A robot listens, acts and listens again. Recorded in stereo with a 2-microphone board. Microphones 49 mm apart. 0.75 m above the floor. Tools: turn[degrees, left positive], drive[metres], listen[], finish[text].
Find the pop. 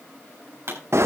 Thought: The pop: about 60° right or 120° right.
Action: turn[-60]
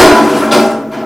Action: listen[]
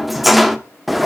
Action: finish[I heard a pop, but can't make it out now. It was about straight ahead or 60° right.]